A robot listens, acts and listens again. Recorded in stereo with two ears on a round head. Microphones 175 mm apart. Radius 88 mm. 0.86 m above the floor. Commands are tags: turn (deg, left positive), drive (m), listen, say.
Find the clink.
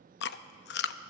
<listen/>
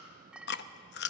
<turn deg="-30"/>
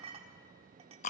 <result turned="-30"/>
<turn deg="-145"/>
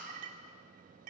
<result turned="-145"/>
<turn deg="-40"/>
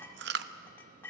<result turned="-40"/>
<turn deg="15"/>
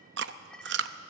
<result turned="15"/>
<say>Facing the clink, 1 to 2 m away.</say>